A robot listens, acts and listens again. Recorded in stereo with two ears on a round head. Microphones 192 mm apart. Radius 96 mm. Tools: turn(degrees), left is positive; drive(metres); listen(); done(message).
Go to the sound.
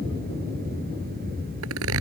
turn(degrees=-90)
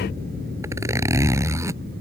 turn(degrees=-15)
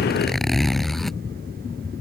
drive(metres=1.0)
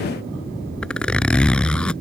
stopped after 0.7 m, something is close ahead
done("Something is in my way. I am facing the zipper but have not reached it.")